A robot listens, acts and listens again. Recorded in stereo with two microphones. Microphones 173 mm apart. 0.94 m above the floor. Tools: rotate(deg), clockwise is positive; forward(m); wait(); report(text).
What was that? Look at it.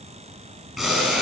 rotate(-30)
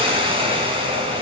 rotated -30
rotate(35)
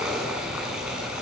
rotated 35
report("Facing the boiling.")